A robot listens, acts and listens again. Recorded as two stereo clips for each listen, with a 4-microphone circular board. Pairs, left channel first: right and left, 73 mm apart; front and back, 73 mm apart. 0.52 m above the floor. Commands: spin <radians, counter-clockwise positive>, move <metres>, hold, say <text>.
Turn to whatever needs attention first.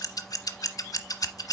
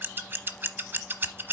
hold
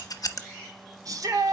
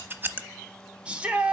spin 1.92
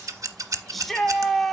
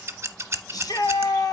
say Facing the shout.